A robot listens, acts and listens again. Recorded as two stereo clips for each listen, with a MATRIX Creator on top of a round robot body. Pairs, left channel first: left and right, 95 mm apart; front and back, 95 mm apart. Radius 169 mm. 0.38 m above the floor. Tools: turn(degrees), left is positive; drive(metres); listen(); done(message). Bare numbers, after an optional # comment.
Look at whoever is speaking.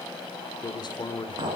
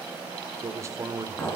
# The man speaking: 125° left.
turn(125)
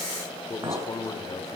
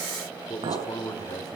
# The man speaking is now 45° left.
turn(45)
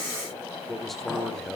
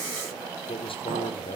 done("Facing the man speaking.")